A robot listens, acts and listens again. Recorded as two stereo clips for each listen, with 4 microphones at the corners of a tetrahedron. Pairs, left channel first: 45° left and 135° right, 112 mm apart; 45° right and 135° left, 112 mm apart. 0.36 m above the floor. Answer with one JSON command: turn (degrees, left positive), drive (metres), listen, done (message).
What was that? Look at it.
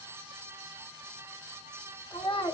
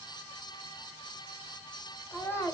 {"turn": 15}
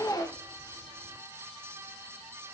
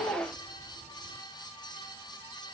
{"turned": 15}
{"done": "Found it: a child speaking, straight ahead."}